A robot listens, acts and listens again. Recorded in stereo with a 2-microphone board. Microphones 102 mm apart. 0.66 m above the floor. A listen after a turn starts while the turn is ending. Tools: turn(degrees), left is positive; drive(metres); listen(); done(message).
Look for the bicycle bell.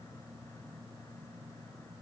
listen()
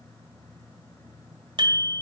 turn(degrees=-55)
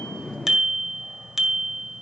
done("Found it: a bicycle bell, straight ahead, 2 to 4 m away.")